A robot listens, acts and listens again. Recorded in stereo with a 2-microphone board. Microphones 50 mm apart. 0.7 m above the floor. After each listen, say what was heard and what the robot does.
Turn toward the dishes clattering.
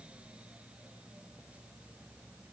Keep listening.
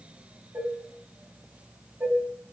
The dishes clattering: about 50° right or 130° right. Turn 50° right.
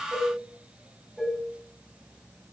Facing the dishes clattering, 2 to 4 m away.